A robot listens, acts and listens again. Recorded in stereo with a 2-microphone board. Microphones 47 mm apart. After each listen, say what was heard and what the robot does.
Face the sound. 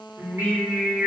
Turn 90° right.
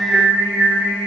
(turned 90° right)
Facing the singing.